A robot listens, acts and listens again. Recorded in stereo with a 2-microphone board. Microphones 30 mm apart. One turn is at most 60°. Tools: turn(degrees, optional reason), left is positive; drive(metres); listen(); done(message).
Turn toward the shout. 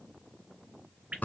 listen()
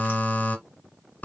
listen()
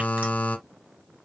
done("I can't make out a shout, only dripping and a buzzer.")